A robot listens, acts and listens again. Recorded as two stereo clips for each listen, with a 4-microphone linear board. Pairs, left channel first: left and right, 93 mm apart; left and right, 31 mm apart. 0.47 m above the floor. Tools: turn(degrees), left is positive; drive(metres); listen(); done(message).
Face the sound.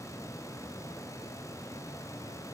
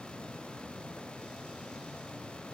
listen()
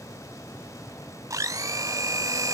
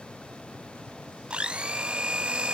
turn(degrees=-35)
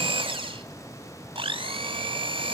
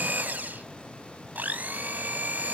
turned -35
turn(degrees=-110)
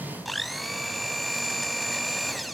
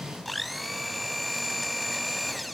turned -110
done("Facing the blender.")